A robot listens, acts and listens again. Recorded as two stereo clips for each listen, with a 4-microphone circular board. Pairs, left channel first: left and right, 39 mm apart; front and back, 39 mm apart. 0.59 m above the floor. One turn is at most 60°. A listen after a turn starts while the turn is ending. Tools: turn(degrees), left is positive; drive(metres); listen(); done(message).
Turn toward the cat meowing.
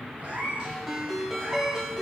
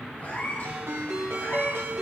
turn(degrees=-35)
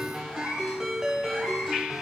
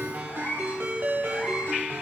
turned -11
turn(degrees=-10)
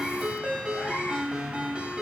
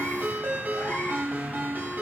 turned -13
turn(degrees=20)
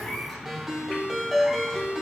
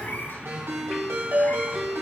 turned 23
listen()
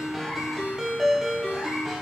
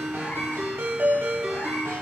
listen()
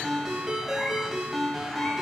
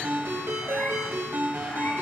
done("I heard a cat meowing from this way, but can't make it out now.")